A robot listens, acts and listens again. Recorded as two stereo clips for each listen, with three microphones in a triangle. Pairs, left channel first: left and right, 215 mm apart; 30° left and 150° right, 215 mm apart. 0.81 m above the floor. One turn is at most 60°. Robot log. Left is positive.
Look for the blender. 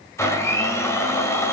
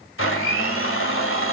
note: The blender: 15° left.
cmd yaw +15
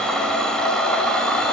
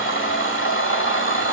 end: Found it: a blender, straight ahead, 1 to 2 m away.